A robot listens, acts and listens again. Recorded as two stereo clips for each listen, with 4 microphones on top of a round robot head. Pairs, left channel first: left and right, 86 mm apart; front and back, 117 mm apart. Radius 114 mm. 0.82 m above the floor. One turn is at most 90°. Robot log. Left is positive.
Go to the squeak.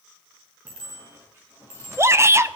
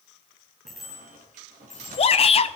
note: The squeak: 160° right.
cmd yaw -90
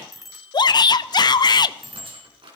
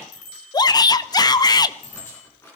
note: The squeak is now 70° right.
cmd yaw -70
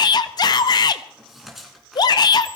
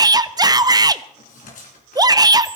cmd fwd 1.0
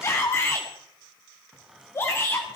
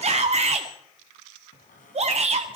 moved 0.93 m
cmd fwd 1.0
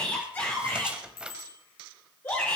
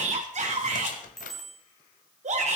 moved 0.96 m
note: The squeak is now 10° right.
cmd yaw -10
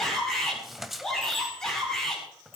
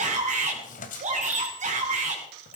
cmd fwd 1.0
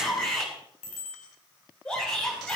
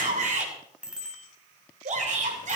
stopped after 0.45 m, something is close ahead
cmd idle
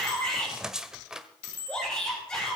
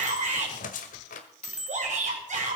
end: Arrived at the squeak, straight ahead.